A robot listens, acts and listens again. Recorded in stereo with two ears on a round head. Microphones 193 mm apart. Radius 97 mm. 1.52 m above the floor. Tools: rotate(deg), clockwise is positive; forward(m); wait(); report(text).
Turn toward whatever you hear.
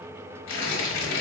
rotate(-65)
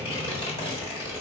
rotate(-30)
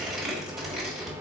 report("Found it: tearing paper, straight ahead.")